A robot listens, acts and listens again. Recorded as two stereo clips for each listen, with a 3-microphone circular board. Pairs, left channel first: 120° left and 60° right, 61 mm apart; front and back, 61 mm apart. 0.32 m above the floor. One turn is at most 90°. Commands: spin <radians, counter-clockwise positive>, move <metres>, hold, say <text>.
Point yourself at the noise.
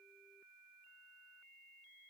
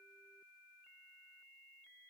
hold
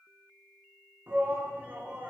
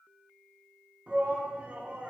spin -1.57
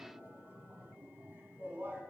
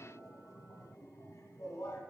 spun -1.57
spin -0.17
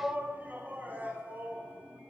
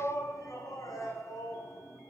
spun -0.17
say Found it: a shout, straight ahead, 2 to 4 m away.